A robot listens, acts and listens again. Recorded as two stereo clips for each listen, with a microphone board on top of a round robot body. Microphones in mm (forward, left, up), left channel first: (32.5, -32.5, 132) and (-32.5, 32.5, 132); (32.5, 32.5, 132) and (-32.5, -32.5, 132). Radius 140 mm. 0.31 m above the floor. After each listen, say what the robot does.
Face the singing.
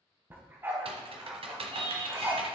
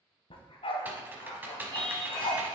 Turn 120° left.
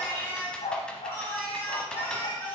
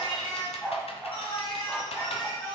Turn 30° left.
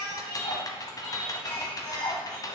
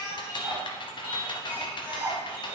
Found it: singing, straight ahead.